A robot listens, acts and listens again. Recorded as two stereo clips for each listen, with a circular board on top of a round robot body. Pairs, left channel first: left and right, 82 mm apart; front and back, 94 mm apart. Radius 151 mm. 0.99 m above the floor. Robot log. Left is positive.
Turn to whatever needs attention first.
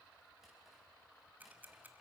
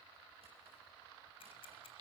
cmd idle
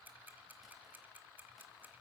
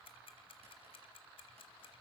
cmd idle
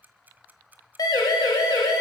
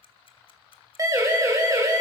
note: The siren: 125° left.
cmd yaw +125
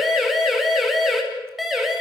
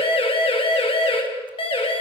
end: Found it: a siren, straight ahead, 2 to 4 m away.